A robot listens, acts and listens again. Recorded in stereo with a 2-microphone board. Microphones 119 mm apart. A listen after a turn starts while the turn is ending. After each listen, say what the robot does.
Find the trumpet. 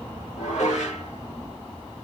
Keep listening.
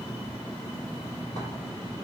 Keep listening.
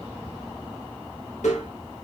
I can't make out a trumpet, only dishes clattering.